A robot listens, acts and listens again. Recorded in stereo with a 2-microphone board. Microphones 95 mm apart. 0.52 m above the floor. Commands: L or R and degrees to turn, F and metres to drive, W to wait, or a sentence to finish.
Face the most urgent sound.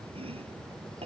W
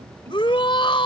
L60
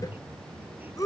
L40
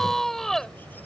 Facing the shout.